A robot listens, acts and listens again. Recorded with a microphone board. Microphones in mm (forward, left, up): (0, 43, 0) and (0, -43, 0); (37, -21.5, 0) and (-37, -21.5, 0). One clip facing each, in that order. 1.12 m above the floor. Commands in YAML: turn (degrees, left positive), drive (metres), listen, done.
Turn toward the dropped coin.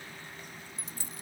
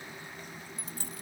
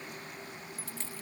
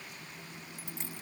turn: -110
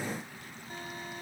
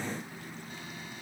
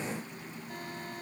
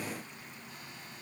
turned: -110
done: "Facing where the dropped coin came from. I can't hear it now."